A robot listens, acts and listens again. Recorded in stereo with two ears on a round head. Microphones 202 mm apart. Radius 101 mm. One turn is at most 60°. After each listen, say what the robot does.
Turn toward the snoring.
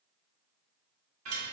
Keep listening.
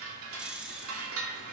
Turn 30° right.
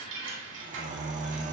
Turn 60° right.
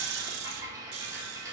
Turn 60° right.
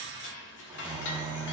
Turn 20° right.
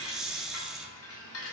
Facing the snoring, 1 to 2 m away.